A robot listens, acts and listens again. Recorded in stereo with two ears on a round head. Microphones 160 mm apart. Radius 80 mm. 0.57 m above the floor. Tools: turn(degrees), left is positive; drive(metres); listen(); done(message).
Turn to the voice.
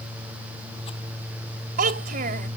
turn(degrees=-50)
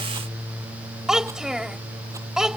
done("Found it: a child speaking, straight ahead.")